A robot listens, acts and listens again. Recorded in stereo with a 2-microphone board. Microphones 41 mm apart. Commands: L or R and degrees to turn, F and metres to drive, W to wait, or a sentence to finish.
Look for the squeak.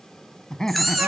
L30
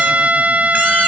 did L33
W
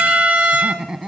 W
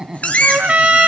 L145
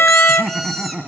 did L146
W
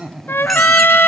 W
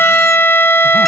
Facing where the squeak came from. I can't hear it now.